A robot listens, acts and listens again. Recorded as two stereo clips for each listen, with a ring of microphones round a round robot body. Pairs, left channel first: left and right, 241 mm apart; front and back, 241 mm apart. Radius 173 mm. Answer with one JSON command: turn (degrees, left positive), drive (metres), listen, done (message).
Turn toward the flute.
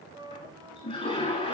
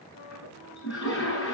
{"turn": -15}
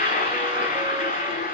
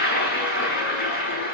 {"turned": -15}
{"listen": true}
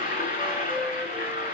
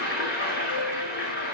{"listen": true}
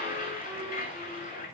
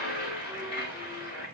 {"done": "Facing where the flute came from. I can't hear it now."}